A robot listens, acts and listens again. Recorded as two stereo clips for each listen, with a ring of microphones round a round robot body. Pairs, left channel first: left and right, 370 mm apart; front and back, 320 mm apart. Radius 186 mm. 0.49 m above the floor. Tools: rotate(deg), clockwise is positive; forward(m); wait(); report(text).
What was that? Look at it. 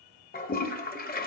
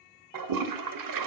rotate(-160)
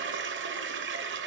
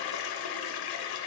rotate(30)
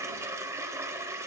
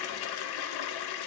report("Facing the toilet flushing, 1 to 2 m away.")